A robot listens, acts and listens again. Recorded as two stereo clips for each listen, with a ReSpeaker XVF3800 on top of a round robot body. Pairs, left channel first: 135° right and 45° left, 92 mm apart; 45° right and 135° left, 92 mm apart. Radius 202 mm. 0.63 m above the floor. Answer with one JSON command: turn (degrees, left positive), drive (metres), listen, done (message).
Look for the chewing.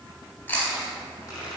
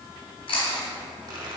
{"turn": -60}
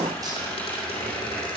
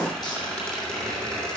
{"listen": true}
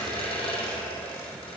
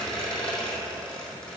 {"listen": true}
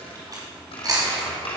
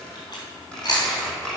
{"done": "Facing the chewing."}